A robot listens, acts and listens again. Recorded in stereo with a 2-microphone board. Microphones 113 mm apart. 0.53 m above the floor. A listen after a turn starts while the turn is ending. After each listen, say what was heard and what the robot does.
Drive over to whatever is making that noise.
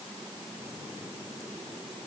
Keep listening.
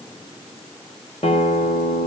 The guitar: about 70° left or 110° left. Turn 70° left.
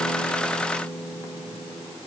So it is at 20° left. Turn 20° left.
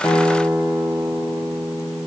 The guitar is now 10° left. Turn 10° left.
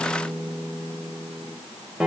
Drive 1.0 m forward.
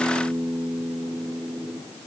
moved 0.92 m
The guitar is now 10° right. Turn 10° right.
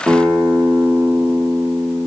Drive 1.0 m forward.
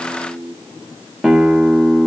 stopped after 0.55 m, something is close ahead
I am next to the guitar.